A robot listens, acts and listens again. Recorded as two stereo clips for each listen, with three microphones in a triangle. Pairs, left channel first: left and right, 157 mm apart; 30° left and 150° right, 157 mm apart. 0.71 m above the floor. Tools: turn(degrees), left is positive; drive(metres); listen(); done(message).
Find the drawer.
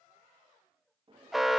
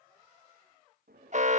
turn(degrees=-145)
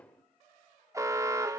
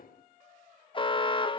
turn(degrees=10)
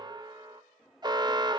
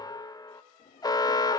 done("Facing the drawer.")